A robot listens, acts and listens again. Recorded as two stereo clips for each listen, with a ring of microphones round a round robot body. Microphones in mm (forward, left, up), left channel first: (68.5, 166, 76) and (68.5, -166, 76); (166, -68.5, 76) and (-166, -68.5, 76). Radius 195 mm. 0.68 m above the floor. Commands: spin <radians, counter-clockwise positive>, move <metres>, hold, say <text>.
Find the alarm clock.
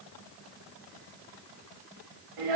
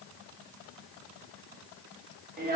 hold
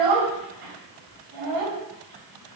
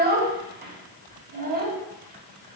hold
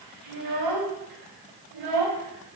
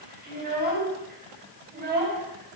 say I can't make out an alarm clock, only a child speaking.